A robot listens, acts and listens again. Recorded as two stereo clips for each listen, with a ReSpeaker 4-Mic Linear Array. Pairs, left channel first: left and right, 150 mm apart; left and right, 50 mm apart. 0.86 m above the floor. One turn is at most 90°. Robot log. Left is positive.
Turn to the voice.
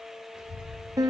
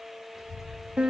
cmd yaw -30
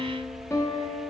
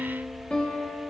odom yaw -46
note: So it is at 140° right.
cmd yaw -90
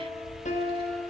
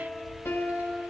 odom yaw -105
note: The child speaking is now 35° right.
cmd yaw -35
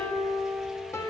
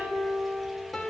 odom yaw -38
cmd idle
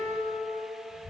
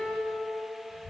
end: Found it: a child speaking, straight ahead, 2 to 4 m away.